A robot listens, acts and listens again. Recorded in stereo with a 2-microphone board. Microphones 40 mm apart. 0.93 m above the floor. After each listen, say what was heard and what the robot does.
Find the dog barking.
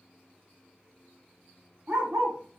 Turn 90° right.
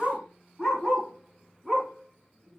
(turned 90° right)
So it is at 25° right. Turn 25° right.
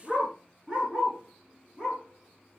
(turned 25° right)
The dog barking is now 25° right. Turn 25° right.
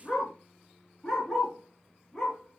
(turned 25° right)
Found it: a dog barking, straight ahead.